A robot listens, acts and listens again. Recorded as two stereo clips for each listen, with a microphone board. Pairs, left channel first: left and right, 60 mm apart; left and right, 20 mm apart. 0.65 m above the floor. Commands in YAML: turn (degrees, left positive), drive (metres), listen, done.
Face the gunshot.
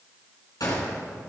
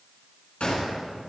turn: 90
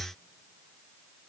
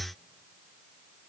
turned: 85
done: "Facing where the gunshot came from. I can't hear it now."